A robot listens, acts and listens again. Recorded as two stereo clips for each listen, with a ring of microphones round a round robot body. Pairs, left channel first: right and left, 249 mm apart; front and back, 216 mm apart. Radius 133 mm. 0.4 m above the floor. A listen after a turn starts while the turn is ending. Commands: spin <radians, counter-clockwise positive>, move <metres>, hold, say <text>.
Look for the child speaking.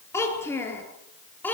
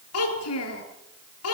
say Facing the child speaking, over 4 m away.